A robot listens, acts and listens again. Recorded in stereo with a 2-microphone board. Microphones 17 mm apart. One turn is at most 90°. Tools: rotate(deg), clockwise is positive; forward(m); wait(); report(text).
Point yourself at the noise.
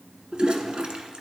rotate(65)
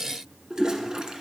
rotate(50)
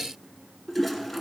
report("Facing the toilet flushing.")